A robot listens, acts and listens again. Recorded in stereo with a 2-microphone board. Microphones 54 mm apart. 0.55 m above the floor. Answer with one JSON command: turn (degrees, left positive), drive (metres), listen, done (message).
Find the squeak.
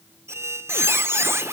{"turn": -60}
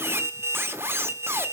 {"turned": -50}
{"turn": -60}
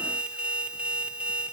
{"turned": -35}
{"turn": -20}
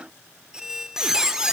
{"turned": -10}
{"turn": -10}
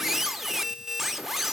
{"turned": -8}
{"done": "Found it: a squeak, straight ahead, under 1 m away."}